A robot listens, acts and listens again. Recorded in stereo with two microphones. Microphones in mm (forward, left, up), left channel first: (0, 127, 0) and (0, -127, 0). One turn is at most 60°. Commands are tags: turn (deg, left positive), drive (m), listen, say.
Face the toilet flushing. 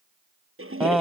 <turn deg="-55"/>
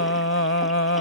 <listen/>
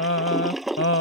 <say>Found it: a toilet flushing, straight ahead.</say>